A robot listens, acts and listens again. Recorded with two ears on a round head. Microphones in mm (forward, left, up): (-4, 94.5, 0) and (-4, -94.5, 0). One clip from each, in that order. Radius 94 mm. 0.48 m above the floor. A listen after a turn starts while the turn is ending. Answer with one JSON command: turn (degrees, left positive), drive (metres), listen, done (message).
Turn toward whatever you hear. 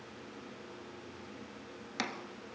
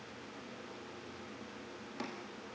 {"turn": 90}
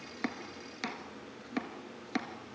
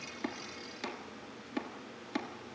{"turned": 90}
{"turn": 15}
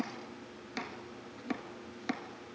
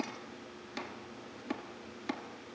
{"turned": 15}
{"done": "Facing the chopping, 1 to 2 m away."}